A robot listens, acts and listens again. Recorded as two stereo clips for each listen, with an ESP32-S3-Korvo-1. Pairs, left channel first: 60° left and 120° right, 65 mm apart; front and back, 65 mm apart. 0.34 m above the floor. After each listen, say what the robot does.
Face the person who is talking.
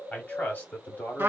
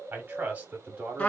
Turn 120° left.
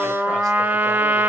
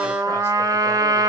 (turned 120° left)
Keep listening.
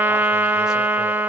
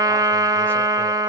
Keep listening.
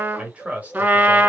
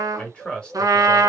Turn 70° right.
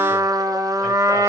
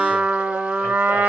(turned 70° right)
Keep listening.
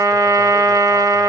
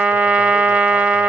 Keep listening.
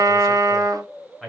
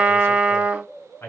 Turn 30° right.
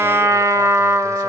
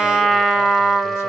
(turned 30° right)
Keep listening.
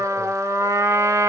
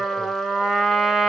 Keep listening.
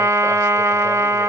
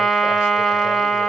I heard a man speaking from this way, but can't make it out now.